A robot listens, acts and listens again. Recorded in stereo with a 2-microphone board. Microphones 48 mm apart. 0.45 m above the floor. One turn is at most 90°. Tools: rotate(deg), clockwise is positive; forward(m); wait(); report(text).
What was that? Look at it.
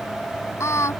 rotate(-75)
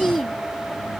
report("Found it: singing, straight ahead.")